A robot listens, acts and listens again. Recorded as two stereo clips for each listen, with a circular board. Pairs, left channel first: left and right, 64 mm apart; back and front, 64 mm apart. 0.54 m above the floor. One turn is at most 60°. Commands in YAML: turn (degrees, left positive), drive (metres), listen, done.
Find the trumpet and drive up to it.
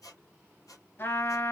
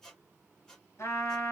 turn: 60
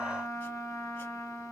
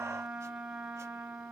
turn: 60
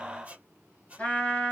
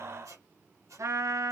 turn: 20
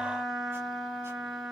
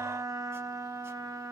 drive: 1.0
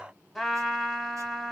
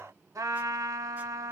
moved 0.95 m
drive: 1.0
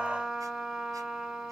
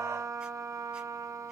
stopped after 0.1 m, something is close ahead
turn: -10
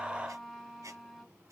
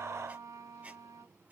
done: "I am next to the trumpet."